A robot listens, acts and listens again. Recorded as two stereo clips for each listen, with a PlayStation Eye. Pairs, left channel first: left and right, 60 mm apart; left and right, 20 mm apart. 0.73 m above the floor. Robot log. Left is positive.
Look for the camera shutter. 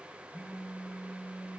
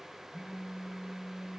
cmd idle
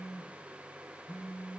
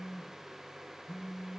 cmd idle
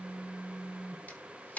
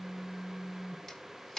note: The camera shutter: about 25° left or 155° left.
cmd yaw +25
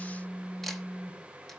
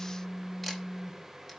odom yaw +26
cmd idle
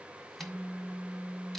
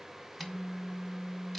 cmd idle
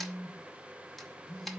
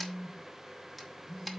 end: Facing the camera shutter, 1 to 2 m away.